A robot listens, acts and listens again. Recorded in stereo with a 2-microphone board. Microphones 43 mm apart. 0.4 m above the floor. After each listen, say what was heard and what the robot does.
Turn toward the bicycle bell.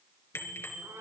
Turn 90° left.
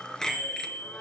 So it is at 10° left. Turn 10° left.
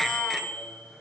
Found it: a bicycle bell, straight ahead.